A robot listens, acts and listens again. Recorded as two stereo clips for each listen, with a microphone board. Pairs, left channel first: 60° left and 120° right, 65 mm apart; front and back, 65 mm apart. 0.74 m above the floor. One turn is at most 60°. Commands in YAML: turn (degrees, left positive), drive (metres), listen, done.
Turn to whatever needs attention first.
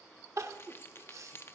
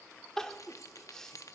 turn: -60
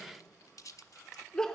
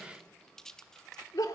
turn: -20
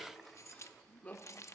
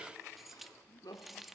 done: "Facing the crying, under 1 m away."